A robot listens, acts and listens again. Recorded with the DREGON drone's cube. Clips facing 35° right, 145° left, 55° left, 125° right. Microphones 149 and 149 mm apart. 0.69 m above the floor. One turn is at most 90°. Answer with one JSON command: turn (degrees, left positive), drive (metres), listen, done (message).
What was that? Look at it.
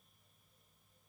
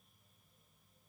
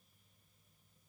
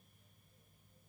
{"listen": true}
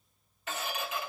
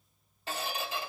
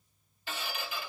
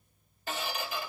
{"turn": -90}
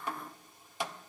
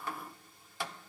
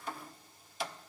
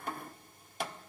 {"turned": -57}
{"turn": -90}
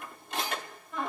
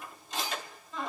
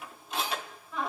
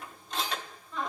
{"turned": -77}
{"turn": -25}
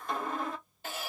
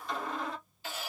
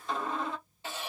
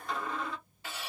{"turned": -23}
{"done": "Facing the squeak, 1 to 2 m away."}